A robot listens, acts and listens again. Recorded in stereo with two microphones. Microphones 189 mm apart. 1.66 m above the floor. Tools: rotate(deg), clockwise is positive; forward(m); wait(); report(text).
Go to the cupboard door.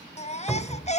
rotate(-30)
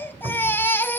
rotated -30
rotate(20)
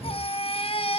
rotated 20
wait()
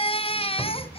forward(1.0)
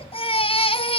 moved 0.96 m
wait()
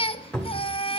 forward(1.0)
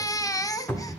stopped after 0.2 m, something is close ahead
rotate(-15)
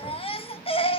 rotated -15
wait()
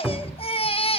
report("Arrived at the cupboard door, straight ahead.")